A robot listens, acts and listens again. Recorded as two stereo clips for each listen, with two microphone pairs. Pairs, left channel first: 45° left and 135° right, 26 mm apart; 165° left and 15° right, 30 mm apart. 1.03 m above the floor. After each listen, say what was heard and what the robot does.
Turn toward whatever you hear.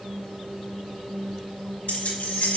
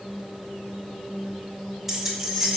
The keys jangling: 70° left. Turn 70° left.
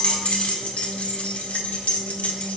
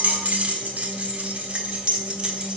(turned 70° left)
The keys jangling is now 40° left. Turn 40° left.
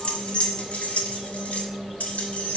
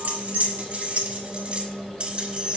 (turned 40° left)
The keys jangling is now 30° left. Turn 30° left.
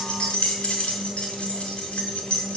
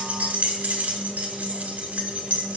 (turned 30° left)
The keys jangling is now 10° left. Turn 10° left.
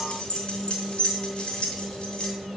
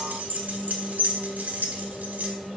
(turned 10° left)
Facing the keys jangling.